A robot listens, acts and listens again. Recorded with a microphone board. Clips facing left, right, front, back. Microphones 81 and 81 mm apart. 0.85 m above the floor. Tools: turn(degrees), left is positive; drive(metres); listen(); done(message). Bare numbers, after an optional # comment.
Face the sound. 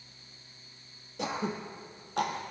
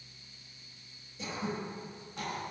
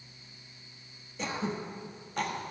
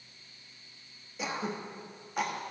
# The throat clearing: 95° left.
turn(95)
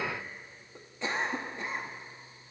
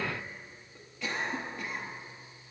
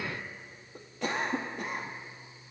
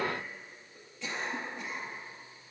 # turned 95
# The throat clearing is now 30° left.
turn(30)
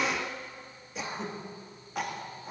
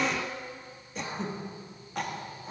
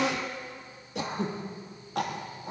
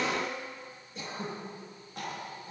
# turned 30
done("Facing the throat clearing, 1 to 2 m away.")